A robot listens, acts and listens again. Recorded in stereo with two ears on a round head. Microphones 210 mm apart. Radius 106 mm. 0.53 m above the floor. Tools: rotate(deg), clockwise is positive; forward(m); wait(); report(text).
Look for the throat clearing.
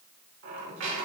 wait()
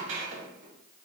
wait()
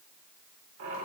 report("I can't make out throat clearing, only a squeak.")